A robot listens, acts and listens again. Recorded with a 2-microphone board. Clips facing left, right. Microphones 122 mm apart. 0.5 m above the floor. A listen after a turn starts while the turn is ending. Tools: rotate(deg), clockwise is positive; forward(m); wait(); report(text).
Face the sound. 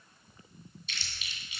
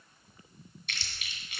rotate(65)
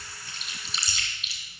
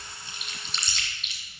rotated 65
report("Found it: chewing, straight ahead, 2 to 4 m away.")